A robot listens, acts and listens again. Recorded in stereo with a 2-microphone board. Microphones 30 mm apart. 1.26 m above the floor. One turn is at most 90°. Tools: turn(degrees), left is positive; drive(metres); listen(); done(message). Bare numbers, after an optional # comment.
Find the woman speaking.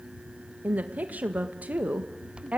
# The woman speaking: about 55° right or 125° right.
turn(-55)
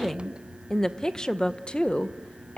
# So it is at 45° left.
turn(45)
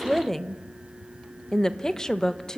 # The woman speaking is now 20° left.
turn(20)
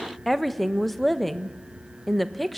done("Found it: a woman speaking, straight ahead, 1 to 2 m away.")